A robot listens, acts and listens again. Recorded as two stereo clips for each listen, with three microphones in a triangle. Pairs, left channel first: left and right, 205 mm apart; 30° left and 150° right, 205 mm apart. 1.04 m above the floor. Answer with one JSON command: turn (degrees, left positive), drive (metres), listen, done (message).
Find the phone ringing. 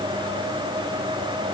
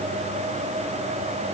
{"listen": true}
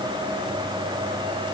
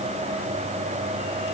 {"listen": true}
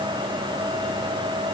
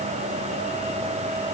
{"done": "I can't make out a phone ringing."}